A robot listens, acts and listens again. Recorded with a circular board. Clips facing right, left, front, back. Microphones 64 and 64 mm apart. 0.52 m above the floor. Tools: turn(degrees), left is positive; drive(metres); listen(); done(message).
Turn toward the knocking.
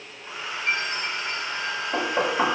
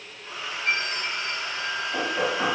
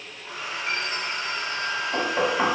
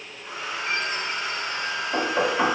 turn(degrees=-110)
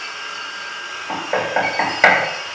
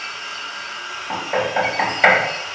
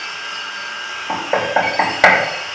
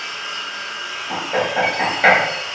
turn(degrees=-25)
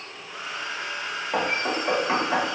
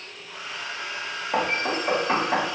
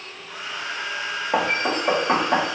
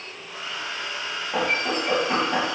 done("Found it: knocking, straight ahead.")